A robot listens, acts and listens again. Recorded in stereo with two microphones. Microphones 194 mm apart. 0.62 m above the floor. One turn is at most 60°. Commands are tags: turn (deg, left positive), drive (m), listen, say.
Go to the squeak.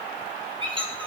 <turn deg="-25"/>
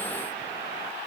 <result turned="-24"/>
<listen/>
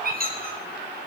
<turn deg="-60"/>
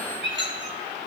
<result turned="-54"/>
<turn deg="-60"/>
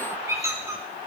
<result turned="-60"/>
<turn deg="-15"/>
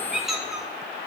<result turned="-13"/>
<drive m="1.0"/>
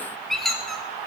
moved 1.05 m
<drive m="1.0"/>
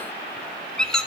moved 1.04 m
<drive m="1.0"/>
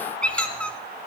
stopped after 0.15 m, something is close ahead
<say>I am next to the squeak.</say>